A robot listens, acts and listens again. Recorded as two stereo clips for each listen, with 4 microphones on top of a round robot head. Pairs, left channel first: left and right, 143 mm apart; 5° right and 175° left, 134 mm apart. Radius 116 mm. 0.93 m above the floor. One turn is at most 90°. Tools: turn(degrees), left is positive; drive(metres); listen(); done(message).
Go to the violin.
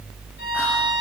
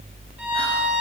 turn(degrees=90)
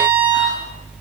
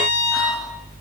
turn(degrees=25)
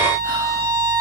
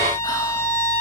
turn(degrees=-10)
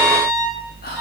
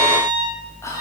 drive(metres=1.0)
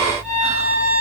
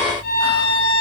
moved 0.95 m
drive(metres=1.0)
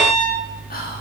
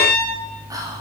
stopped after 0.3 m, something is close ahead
done("Arrived at the violin, straight ahead.")